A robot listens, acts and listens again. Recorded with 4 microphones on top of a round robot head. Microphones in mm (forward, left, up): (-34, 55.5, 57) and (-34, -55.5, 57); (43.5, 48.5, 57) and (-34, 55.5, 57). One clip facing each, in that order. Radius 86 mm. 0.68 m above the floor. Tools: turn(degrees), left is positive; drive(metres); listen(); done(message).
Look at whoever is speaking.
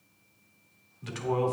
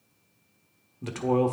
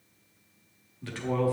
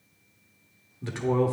turn(degrees=-120)
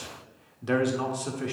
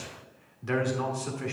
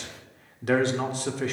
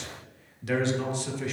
turn(degrees=20)
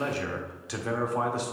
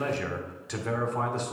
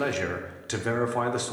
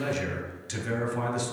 turn(degrees=10)
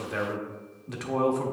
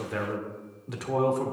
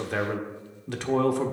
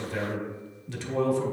done("Facing the man speaking, 1 to 2 m away.")